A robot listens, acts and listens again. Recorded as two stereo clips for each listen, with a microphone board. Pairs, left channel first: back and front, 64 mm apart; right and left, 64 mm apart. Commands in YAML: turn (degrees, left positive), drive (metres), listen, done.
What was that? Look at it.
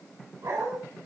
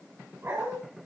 turn: 40
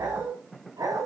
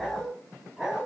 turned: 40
done: "Found it: a dog barking, straight ahead."